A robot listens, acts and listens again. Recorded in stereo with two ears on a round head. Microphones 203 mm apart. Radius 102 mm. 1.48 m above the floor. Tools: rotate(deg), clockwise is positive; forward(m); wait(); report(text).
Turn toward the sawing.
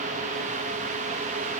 wait()
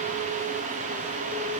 wait()
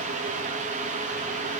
report("I can't make out sawing.")